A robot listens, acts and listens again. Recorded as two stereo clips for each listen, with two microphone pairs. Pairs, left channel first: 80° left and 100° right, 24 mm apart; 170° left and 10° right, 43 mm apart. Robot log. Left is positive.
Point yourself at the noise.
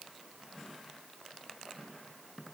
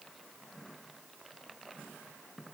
cmd idle
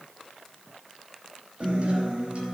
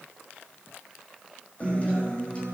note: The guitar: 130° right.
cmd yaw -130
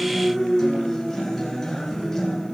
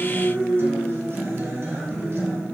note: The guitar is now 10° left.
cmd yaw +10
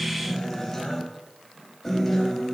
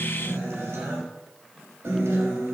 end: Facing the guitar, over 4 m away.